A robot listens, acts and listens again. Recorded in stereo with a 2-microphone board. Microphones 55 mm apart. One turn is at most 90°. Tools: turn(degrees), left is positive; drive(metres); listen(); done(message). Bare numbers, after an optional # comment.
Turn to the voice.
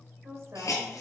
# The woman speaking: about 65° right or 115° right.
turn(-65)
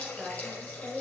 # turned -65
# So it is at 30° right.
turn(-30)
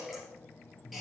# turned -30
listen()
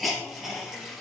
listen()
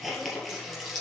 done("I heard a woman speaking from this way, but can't make it out now.")